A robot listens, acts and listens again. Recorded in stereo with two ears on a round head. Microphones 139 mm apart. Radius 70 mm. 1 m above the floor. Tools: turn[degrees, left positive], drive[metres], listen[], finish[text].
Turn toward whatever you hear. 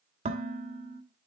Thought: The dishes clattering: about 40° right or 140° right.
Action: turn[-40]
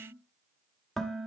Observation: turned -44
Action: finish[Facing the dishes clattering, 1 to 2 m away.]